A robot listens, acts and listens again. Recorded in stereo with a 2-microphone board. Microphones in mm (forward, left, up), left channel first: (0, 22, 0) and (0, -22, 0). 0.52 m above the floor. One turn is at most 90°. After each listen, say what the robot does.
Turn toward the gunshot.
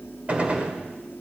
Turn 30° right.
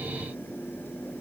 Keep listening.
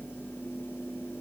I heard a gunshot, but can't make it out now. It was about straight ahead or 120° right.